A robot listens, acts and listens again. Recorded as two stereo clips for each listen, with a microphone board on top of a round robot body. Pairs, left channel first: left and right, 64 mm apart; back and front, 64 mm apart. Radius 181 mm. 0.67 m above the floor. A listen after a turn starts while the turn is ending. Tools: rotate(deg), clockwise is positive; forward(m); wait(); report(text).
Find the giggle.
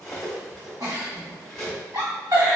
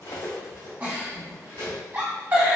rotate(60)
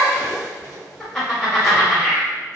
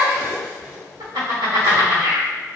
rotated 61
report("Found it: a giggle, straight ahead, 1 to 2 m away.")